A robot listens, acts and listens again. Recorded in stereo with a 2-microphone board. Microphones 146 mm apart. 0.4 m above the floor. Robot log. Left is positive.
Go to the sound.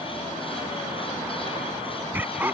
cmd yaw -30
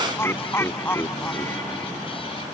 note: So it is at 20° left.
cmd yaw +20
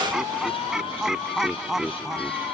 cmd fwd 1.0
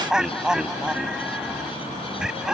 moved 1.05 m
cmd fwd 1.0
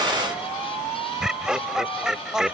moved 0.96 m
cmd fwd 1.0
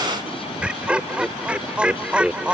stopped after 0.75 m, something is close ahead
note: The laughter is now 10° right.
cmd yaw -10
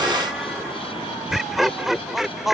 end: Arrived at the laughter, straight ahead.